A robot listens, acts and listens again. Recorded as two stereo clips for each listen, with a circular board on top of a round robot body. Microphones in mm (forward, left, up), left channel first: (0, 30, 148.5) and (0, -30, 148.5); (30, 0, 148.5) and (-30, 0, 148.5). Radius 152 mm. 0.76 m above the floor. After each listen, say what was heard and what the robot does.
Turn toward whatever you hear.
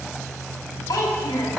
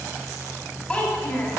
The child speaking: 75° left. Turn 75° left.
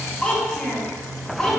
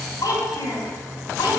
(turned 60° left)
The child speaking is now 15° left. Turn 15° left.
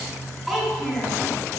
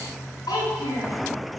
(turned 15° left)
Found it: a child speaking, straight ahead.